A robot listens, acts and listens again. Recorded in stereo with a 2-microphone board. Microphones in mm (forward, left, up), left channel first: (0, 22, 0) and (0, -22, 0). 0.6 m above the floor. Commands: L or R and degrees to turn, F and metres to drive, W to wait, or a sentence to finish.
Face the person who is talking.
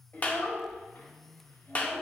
L90
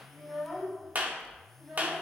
R15
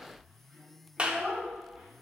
R15
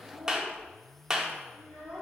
Facing the child speaking.